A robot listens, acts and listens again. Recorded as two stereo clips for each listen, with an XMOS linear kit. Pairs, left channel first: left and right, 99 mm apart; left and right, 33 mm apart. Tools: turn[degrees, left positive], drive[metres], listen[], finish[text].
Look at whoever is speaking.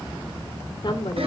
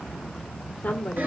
Thought: The woman speaking: about 60° left or 120° left.
Action: turn[60]
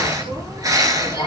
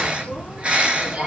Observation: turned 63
Action: listen[]
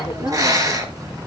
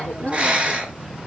Action: listen[]
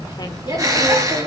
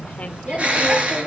Thought: So it is at 50° left.
Action: turn[50]
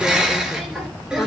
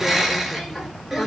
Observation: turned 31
Thought: Nothing new. It was at 20° left.
Action: turn[20]
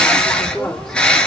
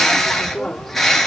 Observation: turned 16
Action: finish[Facing the woman speaking.]